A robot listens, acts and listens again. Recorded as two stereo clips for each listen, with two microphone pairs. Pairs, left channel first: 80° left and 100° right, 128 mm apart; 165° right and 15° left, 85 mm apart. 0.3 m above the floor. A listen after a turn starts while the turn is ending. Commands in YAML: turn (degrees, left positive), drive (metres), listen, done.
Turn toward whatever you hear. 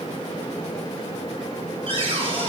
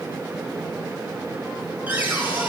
turn: -55
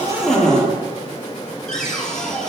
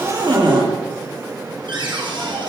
done: "Found it: a cupboard door, straight ahead, over 4 m away."